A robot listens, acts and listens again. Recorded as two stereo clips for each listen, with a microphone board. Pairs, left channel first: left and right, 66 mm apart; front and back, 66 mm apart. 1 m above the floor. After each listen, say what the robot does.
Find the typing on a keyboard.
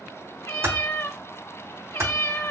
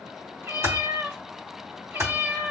Turn 130° right.
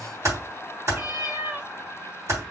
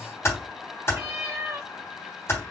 Turn 50° right.
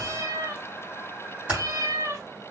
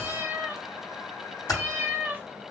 Turn 15° right.
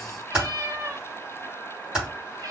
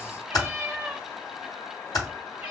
Turn 10° right.
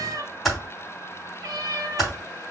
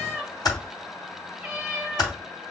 Found it: typing on a keyboard, straight ahead.